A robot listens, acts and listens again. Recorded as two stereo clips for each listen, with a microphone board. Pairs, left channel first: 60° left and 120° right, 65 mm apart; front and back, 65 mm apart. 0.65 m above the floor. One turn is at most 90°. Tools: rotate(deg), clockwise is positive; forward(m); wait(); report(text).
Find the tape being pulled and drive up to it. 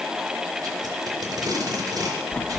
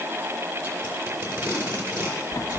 rotate(90)
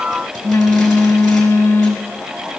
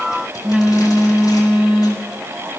rotate(45)
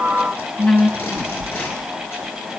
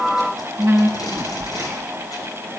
forward(1.0)
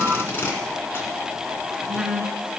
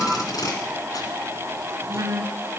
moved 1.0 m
forward(1.0)
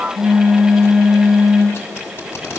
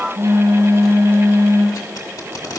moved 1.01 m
rotate(-10)
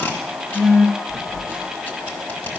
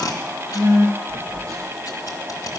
forward(1.0)
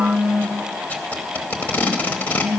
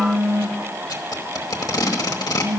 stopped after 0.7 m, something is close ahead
report("I am next to the tape being pulled.")